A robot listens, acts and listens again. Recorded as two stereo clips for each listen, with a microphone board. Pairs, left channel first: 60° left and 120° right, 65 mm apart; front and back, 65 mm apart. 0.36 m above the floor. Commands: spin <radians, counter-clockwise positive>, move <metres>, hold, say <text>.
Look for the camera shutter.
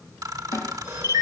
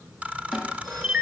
spin -1.92
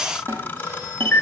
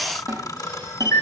say Facing the camera shutter, under 1 m away.